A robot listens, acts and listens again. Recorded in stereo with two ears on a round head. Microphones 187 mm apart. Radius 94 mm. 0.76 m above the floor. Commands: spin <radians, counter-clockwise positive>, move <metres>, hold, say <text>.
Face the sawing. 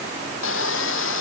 spin 1.13
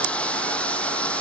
say Facing the sawing.